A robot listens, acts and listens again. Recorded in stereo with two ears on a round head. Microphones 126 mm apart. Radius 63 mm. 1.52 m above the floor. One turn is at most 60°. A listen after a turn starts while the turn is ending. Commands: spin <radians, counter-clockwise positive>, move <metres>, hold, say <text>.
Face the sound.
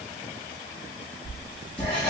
spin 0.52
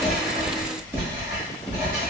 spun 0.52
spin -0.35
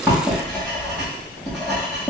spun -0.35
say Facing the writing.